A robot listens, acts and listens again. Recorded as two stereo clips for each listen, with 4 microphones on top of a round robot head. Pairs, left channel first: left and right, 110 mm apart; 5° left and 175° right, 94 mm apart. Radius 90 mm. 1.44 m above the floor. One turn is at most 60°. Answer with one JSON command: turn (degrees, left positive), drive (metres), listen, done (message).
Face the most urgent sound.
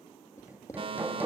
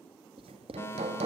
{"turn": -60}
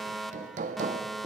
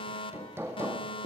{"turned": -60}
{"done": "Facing the fire alarm."}